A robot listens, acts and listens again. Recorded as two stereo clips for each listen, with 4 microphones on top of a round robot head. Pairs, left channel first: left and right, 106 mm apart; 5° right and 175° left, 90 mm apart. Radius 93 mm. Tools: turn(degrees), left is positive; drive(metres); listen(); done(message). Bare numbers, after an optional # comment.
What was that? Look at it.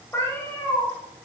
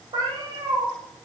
# The cat meowing: 155° left.
turn(155)
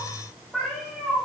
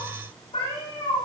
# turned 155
done("Facing the cat meowing.")